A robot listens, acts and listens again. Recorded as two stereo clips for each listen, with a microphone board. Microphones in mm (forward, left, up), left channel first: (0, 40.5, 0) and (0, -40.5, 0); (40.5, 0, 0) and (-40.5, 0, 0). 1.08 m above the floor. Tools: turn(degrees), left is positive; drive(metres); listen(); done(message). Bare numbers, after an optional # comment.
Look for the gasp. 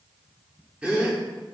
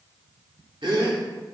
# The gasp: 165° right.
turn(-165)
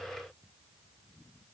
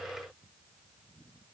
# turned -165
done("Facing where the gasp came from. I can't hear it now.")